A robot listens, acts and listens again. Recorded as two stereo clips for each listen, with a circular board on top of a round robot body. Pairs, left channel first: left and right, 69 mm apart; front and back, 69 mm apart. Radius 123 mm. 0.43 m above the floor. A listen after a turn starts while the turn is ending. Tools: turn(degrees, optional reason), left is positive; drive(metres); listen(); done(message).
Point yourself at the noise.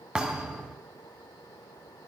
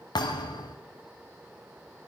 turn(degrees=-10, reason="The thud: 10° right.")
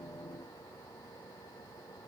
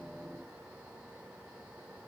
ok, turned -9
done("Facing where the thud came from. I can't hear it now.")